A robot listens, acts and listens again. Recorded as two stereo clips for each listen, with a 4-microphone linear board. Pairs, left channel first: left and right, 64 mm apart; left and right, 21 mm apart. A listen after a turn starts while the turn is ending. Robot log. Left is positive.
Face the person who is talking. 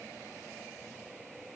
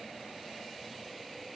cmd idle
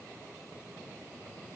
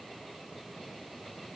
cmd idle
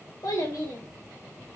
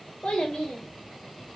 note: The child speaking: about 65° left or 115° left.
cmd yaw +65
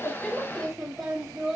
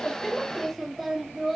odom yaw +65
end: Found it: a child speaking, straight ahead, 1 to 2 m away.